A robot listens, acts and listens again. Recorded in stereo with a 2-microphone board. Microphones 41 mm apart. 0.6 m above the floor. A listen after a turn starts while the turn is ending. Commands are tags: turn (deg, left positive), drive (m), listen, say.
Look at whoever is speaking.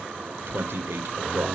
<turn deg="-65"/>
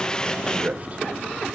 <turn deg="-40"/>
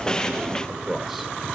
<say>Facing the man speaking, 2 to 4 m away.</say>